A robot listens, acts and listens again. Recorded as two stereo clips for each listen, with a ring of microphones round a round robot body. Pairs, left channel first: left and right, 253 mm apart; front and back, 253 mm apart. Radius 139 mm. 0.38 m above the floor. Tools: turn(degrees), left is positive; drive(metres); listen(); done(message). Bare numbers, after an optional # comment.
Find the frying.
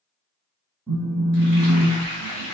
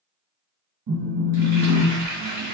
# The frying: 130° right.
turn(-130)
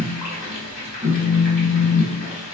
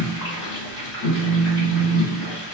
# The frying is now 40° left.
turn(40)
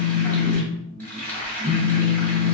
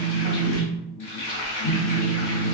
done("Found it: frying, straight ahead, 1 to 2 m away.")